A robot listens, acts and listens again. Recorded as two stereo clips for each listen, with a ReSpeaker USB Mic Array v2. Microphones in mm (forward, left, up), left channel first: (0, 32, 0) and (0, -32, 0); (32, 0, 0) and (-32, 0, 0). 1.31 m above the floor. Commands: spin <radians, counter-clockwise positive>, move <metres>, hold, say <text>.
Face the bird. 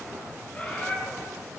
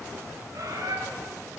spin 2.71
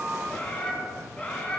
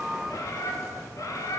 spin 0.35
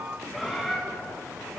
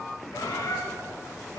say Found it: a bird, straight ahead.